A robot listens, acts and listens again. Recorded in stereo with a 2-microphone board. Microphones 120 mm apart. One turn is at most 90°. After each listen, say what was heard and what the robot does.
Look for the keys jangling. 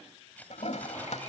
Turn 30° left.
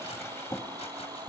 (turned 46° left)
Keep listening.
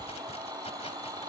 Keep listening.
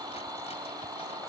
I heard keys jangling, but can't make it out now. It was about 35° right or 120° left.